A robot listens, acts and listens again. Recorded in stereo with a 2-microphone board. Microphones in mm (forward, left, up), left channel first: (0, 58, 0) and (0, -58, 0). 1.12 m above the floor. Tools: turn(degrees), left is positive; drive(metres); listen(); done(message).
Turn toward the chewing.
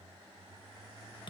listen()
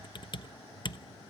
listen()
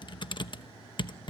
done("I can't make out chewing, only typing on a keyboard.")